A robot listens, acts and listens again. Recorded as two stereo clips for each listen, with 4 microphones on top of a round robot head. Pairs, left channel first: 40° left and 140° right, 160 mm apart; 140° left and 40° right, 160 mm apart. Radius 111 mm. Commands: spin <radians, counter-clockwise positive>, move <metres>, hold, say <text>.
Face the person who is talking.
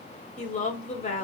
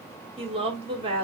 spin 0.17
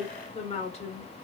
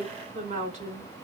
say Found it: a woman speaking, straight ahead, 1 to 2 m away.